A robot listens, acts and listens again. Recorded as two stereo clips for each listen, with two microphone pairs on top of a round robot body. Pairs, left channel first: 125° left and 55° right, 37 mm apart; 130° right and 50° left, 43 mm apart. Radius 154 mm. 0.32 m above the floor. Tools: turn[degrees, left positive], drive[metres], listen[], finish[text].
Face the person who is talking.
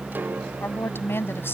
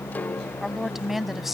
Thought: The woman speaking: 130° left.
Action: turn[130]
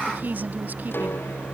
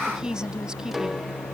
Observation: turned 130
Thought: The woman speaking is now 20° right.
Action: turn[-20]
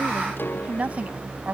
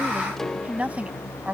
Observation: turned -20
Action: finish[Found it: a woman speaking, straight ahead.]